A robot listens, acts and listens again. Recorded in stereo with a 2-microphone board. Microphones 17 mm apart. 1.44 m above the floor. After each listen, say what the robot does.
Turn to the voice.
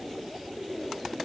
Keep listening.
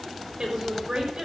Turn 50° right.
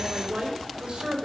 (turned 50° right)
Turn 80° right.
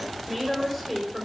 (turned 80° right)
Facing the woman speaking, over 4 m away.